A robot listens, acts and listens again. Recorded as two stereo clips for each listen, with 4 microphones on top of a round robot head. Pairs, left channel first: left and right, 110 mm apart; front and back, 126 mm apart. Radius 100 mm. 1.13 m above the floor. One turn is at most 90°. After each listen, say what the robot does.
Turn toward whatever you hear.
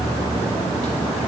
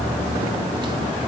Keep listening.
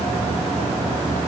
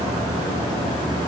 Keep listening.
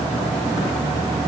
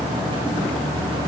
I can't make out anything to turn to.